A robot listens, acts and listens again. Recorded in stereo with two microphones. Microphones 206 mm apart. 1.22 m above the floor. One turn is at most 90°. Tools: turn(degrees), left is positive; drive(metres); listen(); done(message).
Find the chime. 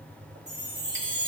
turn(degrees=-20)
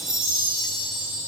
done("Facing the chime.")